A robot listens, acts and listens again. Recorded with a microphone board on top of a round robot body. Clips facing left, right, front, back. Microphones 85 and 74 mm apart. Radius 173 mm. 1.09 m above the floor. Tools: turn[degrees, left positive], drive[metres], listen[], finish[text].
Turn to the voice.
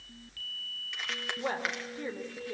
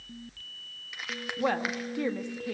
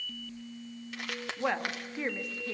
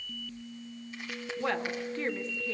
Thought: The woman speaking: 80° right.
Action: turn[-80]
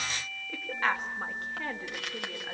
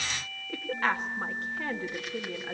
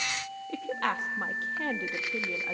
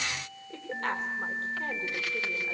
Action: finish[Facing the woman speaking.]